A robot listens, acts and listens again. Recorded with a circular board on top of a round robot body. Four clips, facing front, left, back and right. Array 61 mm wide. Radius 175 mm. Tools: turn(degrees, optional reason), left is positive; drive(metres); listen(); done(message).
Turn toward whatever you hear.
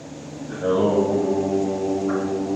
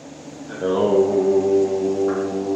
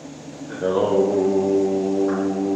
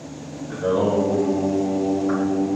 turn(degrees=115, reason="The singing: 115° left.")
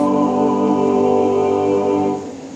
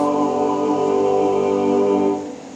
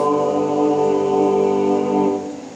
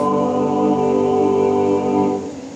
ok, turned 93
turn(degrees=25, reason="The singing is now 25° left.")
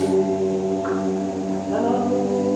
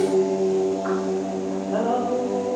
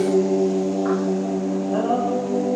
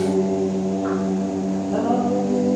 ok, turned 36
done("Found it: singing, straight ahead.")